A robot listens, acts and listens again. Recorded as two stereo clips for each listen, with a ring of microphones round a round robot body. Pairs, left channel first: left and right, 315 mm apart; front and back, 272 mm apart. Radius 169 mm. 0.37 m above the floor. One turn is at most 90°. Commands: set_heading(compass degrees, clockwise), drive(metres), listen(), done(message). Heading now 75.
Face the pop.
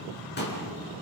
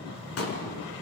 set_heading(45)
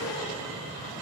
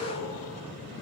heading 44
done("Facing where the pop came from. I can't hear it now.")